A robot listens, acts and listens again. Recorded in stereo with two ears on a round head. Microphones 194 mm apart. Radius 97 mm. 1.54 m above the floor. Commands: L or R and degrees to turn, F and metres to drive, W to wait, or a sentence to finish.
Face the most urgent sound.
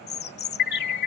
L50
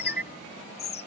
Facing the alarm.